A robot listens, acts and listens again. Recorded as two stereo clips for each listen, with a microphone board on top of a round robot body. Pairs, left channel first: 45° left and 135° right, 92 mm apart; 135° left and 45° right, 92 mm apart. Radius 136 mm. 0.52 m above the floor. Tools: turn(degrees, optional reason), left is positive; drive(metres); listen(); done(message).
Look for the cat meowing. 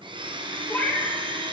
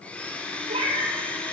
turn(degrees=-25, reason="The cat meowing: 25° right.")
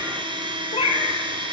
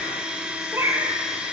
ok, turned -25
turn(degrees=30, reason="The cat meowing is now 30° left.")
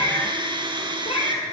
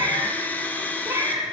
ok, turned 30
turn(degrees=25, reason="The cat meowing is now 25° left.")
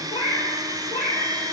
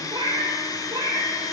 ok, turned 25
turn(degrees=15, reason="The cat meowing is now 15° left.")
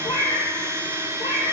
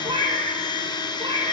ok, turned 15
done("Found it: a cat meowing, straight ahead, 2 to 4 m away.")